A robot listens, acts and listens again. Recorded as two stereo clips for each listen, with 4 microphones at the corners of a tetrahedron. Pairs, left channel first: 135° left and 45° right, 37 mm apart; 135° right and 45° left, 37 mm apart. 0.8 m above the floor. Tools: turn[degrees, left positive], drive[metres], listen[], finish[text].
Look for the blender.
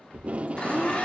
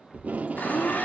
Thought: The blender: 165° right.
Action: turn[-165]
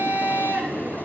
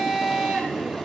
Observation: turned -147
Thought: The blender is now 20° right.
Action: turn[-20]
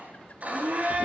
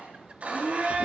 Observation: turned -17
Action: finish[Facing the blender.]